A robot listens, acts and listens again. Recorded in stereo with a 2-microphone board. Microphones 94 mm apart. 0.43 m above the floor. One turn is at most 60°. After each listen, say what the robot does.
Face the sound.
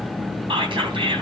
Turn 60° right.
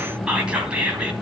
Turn 10° right.
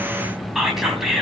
Facing the whispering, 2 to 4 m away.